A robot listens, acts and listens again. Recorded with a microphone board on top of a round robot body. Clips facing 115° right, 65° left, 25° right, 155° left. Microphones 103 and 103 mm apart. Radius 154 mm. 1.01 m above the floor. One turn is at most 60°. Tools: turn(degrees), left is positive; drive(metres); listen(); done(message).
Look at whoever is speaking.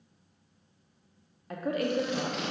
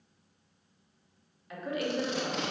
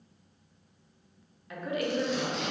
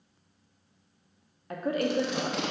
turn(degrees=-60)
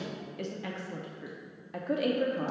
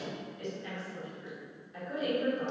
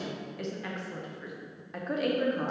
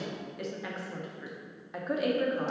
turn(degrees=-60)
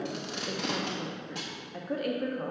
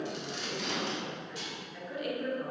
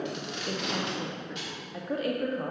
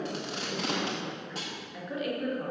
turn(degrees=-60)
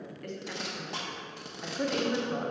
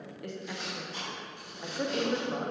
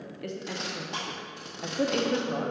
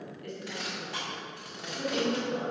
turn(degrees=-10)
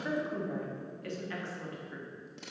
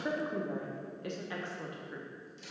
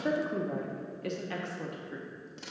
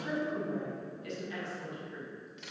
done("Facing the woman speaking, under 1 m away.")